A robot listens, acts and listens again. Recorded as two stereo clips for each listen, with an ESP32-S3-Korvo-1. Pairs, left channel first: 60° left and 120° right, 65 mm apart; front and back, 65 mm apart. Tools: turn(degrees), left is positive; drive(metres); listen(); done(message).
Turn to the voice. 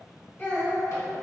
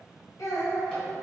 done("Facing the child speaking.")